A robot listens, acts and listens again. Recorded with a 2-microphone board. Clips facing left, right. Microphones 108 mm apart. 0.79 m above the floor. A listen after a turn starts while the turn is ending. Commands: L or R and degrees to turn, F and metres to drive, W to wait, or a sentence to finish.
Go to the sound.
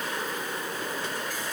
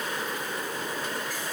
W
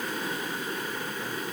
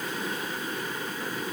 W
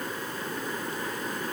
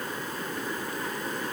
I can't make out anything.